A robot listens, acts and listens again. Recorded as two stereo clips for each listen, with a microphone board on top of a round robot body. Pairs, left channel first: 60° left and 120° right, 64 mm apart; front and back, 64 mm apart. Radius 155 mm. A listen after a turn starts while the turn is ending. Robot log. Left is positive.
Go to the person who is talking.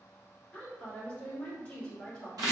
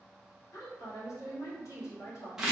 note: The woman speaking: 10° right.
cmd yaw -10
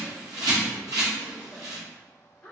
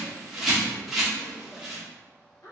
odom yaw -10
cmd fwd 1.0
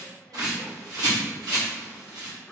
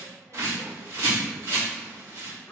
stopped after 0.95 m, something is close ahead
cmd idle
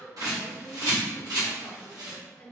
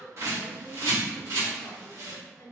note: The woman speaking is now 10° right.
cmd yaw -10
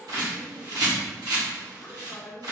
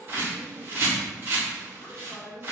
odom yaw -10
end: I am next to the woman speaking.